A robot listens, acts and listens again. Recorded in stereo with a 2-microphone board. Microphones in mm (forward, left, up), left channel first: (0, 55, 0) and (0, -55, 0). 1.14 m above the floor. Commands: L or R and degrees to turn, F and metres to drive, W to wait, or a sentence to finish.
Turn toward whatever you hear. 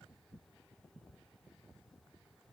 W
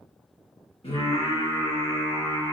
L40
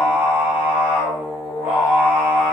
R20
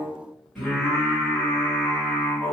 Found it: singing, straight ahead, 2 to 4 m away.